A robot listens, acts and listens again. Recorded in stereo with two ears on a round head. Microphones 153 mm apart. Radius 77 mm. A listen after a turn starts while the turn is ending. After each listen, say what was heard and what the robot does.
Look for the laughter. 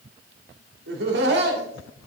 The laughter: about 65° right or 115° right. Turn 65° right.
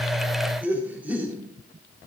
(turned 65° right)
So it is at 10° right. Turn 10° right.
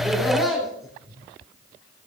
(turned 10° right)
Found it: laughter, straight ahead.